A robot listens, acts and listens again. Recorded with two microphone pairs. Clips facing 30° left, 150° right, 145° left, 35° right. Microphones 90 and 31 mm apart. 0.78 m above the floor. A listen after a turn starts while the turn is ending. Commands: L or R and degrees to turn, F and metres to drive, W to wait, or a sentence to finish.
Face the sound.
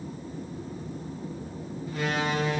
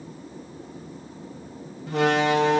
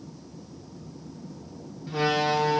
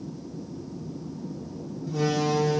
R165
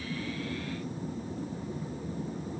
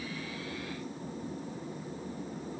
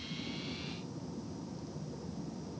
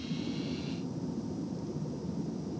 I heard a door slam from this way, but can't make it out now.